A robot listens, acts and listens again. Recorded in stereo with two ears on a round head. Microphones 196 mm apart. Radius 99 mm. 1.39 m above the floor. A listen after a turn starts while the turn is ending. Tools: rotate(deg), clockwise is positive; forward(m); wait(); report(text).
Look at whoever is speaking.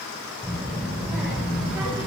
rotate(30)
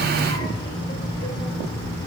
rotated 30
rotate(-15)
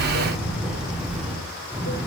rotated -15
rotate(10)
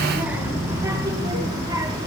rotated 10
rotate(15)
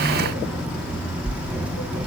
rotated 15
report("Facing the child speaking.")